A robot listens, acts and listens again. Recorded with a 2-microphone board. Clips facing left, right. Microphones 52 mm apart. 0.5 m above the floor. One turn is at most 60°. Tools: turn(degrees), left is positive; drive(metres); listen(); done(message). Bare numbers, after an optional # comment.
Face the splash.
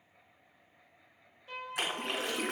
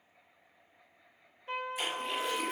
# The splash: about 65° left or 115° left.
turn(60)
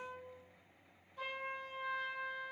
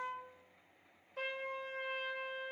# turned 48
listen()
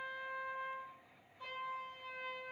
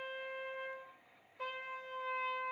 done("I heard a splash, but can't make it out now. It was about 20° left or 65° left.")